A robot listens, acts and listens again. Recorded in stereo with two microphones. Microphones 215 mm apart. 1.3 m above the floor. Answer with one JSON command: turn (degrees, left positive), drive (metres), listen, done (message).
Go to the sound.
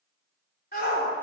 {"turn": 45}
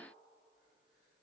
{"listen": true}
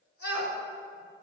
{"turn": 90}
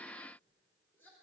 {"listen": true}
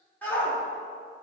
{"turn": 10}
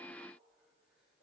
{"listen": true}
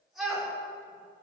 {"drive": 1.0}
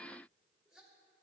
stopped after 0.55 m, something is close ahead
{"listen": true}
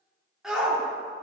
{"done": "Blocked. The shout is further on, straight ahead."}